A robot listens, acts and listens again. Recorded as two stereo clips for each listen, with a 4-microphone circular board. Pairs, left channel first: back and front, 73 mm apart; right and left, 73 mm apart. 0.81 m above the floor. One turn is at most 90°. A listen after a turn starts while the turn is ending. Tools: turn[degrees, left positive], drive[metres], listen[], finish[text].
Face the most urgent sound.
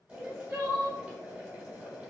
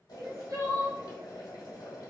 Thought: The crying: 55° left.
Action: turn[55]
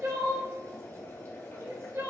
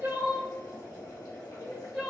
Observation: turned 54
Action: finish[Found it: crying, straight ahead, 1 to 2 m away.]